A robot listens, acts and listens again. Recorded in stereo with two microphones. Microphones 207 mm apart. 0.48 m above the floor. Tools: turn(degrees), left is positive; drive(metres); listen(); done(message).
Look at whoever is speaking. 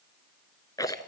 listen()
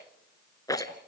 listen()
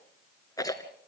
done("I can't make out anyone speaking, only a rattle.")